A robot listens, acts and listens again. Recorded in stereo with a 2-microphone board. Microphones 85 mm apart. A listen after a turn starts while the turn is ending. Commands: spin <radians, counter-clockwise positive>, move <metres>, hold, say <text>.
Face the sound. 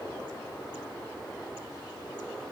hold
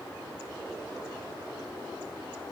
hold
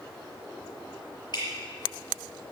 spin 0.96
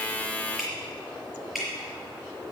say Found it: dripping, straight ahead.